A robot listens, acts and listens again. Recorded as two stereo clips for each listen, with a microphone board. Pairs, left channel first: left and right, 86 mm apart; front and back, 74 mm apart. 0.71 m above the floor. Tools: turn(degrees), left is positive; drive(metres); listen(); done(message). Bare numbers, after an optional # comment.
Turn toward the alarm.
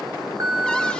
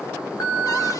# The alarm: 40° right.
turn(-40)
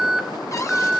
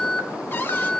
done("Found it: an alarm, straight ahead.")